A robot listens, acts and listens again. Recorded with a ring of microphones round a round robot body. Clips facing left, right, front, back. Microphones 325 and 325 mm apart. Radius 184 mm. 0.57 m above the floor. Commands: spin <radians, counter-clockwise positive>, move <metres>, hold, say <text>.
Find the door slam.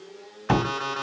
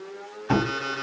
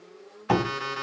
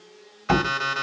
spin 2.27
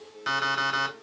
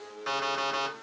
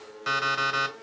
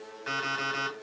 say Facing where the door slam came from. I can't hear it now.